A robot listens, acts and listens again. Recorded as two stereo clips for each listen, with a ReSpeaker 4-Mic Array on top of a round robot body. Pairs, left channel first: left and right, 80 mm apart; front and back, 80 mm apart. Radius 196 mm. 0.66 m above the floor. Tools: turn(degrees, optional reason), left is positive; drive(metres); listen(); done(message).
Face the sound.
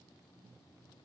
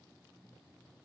listen()
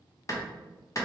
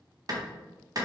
turn(degrees=140, reason="The clap: 140° left.")
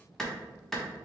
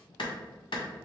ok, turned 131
done("Facing the clap, 1 to 2 m away.")